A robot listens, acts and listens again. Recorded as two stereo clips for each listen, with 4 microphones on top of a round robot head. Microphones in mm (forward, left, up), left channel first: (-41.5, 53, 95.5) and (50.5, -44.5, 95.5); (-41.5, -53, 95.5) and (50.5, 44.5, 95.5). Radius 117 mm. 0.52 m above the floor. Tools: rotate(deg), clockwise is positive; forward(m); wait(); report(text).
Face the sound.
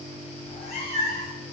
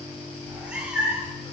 rotate(-120)
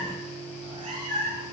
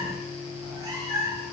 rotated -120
rotate(15)
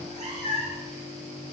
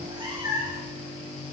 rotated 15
rotate(10)
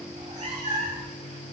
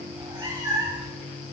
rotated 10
rotate(15)
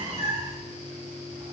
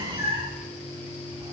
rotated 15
report("Facing the cat meowing.")